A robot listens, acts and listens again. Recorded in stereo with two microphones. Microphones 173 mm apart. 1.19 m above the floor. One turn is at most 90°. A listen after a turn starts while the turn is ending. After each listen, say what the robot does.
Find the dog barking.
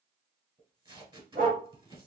Turn 50° right.
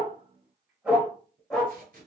Found it: a dog barking, straight ahead, 1 to 2 m away.